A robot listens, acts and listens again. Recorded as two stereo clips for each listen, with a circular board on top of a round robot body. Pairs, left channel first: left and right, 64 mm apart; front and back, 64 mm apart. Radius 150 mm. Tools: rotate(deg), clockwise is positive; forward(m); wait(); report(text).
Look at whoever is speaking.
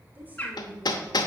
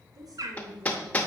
rotate(150)
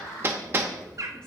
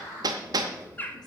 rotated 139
rotate(10)
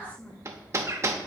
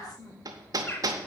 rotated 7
rotate(-25)
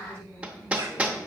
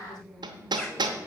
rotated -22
rotate(-15)
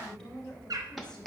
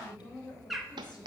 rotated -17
rotate(-10)
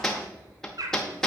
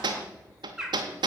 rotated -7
wait()
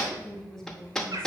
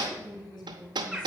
report("Facing the woman speaking.")